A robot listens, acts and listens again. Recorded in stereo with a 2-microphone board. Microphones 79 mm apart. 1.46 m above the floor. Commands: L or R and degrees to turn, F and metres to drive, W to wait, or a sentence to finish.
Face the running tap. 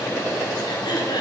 W
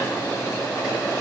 W
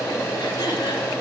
I can't make out a running tap.